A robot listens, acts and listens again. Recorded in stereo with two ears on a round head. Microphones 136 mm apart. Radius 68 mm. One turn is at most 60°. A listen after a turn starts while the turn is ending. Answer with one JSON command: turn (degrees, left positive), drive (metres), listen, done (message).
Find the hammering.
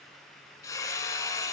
{"turn": 20}
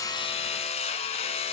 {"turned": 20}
{"turn": 60}
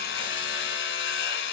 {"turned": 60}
{"turn": 60}
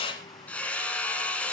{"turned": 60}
{"turn": 10}
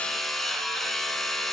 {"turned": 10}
{"done": "Facing the hammering."}